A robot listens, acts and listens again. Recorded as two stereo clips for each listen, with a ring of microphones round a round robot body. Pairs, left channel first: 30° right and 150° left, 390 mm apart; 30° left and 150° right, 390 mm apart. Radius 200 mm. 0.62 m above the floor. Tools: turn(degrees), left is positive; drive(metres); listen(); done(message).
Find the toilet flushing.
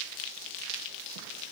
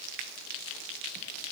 listen()
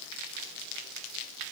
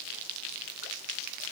listen()
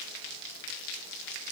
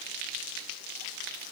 done("I can't make out a toilet flushing.")